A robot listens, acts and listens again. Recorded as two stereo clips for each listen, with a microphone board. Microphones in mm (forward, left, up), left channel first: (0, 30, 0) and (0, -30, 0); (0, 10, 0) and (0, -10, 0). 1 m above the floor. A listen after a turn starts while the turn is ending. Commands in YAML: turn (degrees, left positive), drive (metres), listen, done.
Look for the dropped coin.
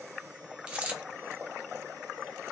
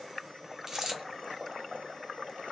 turn: -20
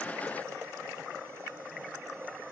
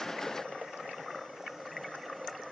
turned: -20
listen: true
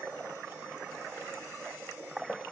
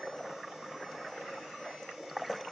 done: "I heard a dropped coin, but can't make it out now. It was about straight ahead or 140° right."